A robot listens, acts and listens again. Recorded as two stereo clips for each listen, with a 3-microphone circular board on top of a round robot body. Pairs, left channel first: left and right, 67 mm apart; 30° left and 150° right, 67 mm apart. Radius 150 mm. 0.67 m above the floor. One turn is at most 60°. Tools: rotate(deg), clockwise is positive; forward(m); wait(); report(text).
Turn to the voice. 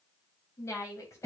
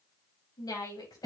rotate(-50)
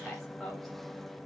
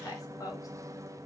report("Facing the woman speaking, 2 to 4 m away.")